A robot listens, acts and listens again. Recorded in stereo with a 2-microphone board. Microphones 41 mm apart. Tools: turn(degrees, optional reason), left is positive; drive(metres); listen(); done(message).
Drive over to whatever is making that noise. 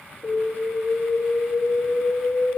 turn(degrees=65, reason="The alarm: about 65° left or 115° left.")
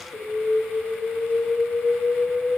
turn(degrees=30, reason="So it is at 30° left.")
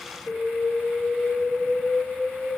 turn(degrees=-10, reason="The alarm is now 10° right.")
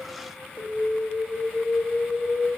drive(metres=1.0)
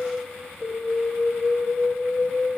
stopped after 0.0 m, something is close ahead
done("Blocked. The alarm is further on, straight ahead.")